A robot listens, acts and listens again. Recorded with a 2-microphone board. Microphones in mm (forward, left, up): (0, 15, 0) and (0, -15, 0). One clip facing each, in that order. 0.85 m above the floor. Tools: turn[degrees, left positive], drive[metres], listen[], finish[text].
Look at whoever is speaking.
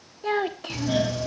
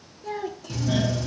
Thought: The child speaking: about 55° left or 125° left.
Action: turn[55]
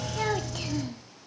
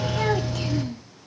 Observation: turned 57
Action: finish[Facing the child speaking.]